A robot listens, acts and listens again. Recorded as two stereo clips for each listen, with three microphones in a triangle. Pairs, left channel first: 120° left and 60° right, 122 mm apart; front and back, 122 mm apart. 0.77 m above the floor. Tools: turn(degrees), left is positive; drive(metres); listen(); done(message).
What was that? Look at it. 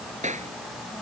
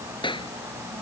turn(degrees=-50)
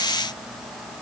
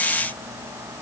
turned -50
listen()
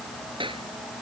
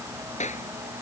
turn(degrees=-15)
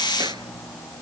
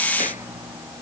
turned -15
listen()
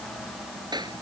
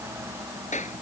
done("Found it: a clap, straight ahead.")